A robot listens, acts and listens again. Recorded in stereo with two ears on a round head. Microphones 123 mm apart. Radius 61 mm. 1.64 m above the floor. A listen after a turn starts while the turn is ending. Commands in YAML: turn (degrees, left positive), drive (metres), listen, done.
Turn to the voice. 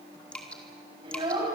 turn: -35
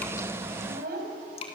turn: -115
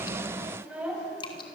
turn: -10
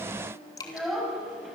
done: "Facing the child speaking, over 4 m away."